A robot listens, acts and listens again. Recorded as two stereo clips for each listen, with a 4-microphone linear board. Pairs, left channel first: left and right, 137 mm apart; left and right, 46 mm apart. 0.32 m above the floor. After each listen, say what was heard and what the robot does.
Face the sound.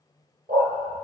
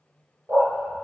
Turn 90° right.
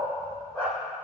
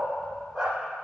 So it is at 10° left. Turn 10° left.
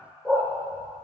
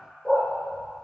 Found it: a dog barking, straight ahead.